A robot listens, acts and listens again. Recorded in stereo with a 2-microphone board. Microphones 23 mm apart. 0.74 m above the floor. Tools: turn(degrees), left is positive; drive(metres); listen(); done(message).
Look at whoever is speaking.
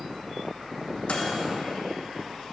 listen()
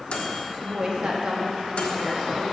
turn(degrees=-45)
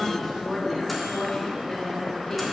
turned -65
turn(degrees=15)
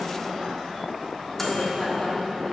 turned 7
turn(degrees=10)
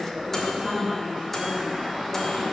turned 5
done("Facing the woman speaking, 1 to 2 m away.")